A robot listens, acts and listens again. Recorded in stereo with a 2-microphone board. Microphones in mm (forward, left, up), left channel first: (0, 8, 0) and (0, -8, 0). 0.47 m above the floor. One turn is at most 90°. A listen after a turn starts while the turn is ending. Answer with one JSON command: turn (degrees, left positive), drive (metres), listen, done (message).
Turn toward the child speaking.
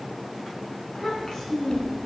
{"turn": 40}
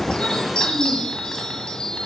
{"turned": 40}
{"listen": true}
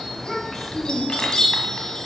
{"turn": 20}
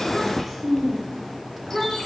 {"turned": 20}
{"turn": 10}
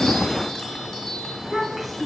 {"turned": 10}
{"done": "Facing the child speaking, 2 to 4 m away."}